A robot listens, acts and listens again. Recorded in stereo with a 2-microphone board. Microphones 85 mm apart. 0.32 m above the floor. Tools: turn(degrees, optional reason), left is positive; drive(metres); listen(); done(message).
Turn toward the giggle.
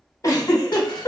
turn(degrees=40, reason="The giggle: about 40° left or 140° left.")
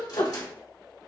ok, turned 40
turn(degrees=95, reason="So it is at 95° left.")
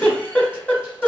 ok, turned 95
turn(degrees=20, reason="The giggle is now 20° left.")
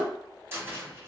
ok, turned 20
listen()
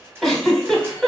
done("Facing the giggle, 1 to 2 m away.")